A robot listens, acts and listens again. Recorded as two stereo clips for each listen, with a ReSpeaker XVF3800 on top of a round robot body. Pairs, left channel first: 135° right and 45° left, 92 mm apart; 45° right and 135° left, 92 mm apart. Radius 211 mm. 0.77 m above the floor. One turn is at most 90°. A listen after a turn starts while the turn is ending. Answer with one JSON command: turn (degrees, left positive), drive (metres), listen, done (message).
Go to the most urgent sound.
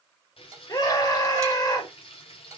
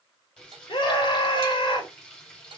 {"turn": -85}
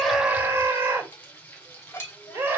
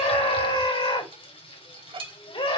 {"turn": -20}
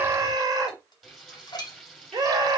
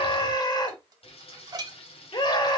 {"drive": 1.0}
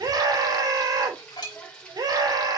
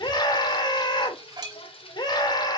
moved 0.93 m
{"drive": 1.0}
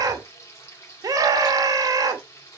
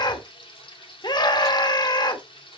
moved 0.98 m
{"drive": 1.0}
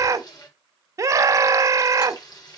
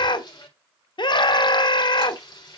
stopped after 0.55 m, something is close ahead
{"turn": -10}
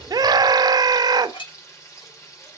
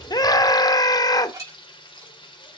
{"done": "Arrived at the scream, straight ahead."}